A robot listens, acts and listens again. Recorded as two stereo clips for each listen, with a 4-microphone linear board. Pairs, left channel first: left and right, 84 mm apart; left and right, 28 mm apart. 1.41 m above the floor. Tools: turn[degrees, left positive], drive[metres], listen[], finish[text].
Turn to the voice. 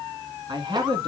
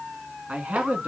Thought: The man speaking: about 65° right or 115° right.
Action: turn[-65]
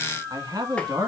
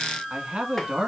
Thought: So it is at 45° right.
Action: turn[-45]
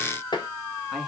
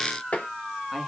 Action: listen[]
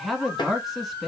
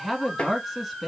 Action: finish[Found it: a man speaking, straight ahead, 1 to 2 m away.]